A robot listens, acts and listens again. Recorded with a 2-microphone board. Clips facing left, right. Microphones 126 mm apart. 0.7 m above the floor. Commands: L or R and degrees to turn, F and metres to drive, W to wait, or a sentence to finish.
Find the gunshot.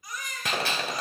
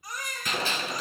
L70
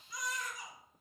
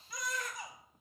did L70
W
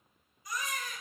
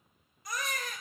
I heard a gunshot, but can't make it out now. It was about straight ahead or 40° left.